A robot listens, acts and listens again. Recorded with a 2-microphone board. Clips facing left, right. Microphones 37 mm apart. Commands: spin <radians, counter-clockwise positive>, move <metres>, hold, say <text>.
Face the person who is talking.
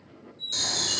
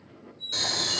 hold
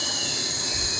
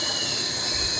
spin 0.79
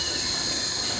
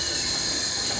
spin 0.17
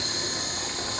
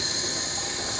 say Found it: a child speaking, straight ahead, under 1 m away.